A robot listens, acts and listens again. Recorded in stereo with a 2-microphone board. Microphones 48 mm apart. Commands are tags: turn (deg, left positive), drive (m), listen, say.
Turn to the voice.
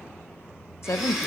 <turn deg="60"/>
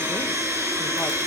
<listen/>
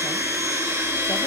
<listen/>
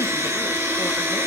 <say>I heard a woman speaking, but can't make it out now. It was about straight ahead or 60° left.</say>